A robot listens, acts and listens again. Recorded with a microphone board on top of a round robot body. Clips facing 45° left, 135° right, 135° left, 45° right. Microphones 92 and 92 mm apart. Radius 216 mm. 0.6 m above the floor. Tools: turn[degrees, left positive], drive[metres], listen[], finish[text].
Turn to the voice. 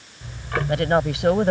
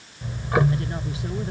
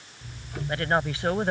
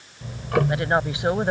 Thought: The woman speaking: 30° left.
Action: turn[30]
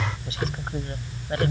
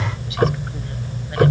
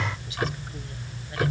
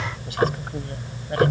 Action: listen[]
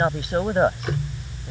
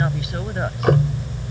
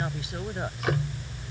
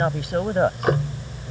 Thought: The woman speaking is now 10° right.
Action: turn[-10]
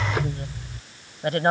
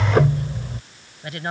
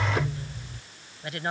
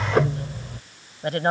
Action: finish[Facing the woman speaking.]